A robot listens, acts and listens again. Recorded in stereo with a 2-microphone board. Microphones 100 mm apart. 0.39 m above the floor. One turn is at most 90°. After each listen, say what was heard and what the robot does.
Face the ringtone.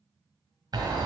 Keep listening.
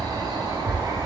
Keep listening.
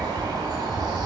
I can't make out a ringtone, only a bird.